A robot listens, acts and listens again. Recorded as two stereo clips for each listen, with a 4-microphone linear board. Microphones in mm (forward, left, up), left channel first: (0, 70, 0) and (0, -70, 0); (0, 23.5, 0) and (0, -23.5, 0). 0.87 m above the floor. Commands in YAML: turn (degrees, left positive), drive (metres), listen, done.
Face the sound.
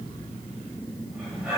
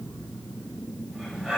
turn: -30
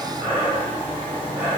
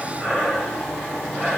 turn: -140
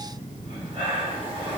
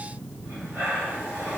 turn: -45
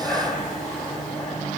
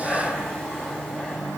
turn: 20
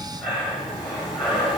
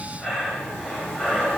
done: "Found it: breathing, straight ahead."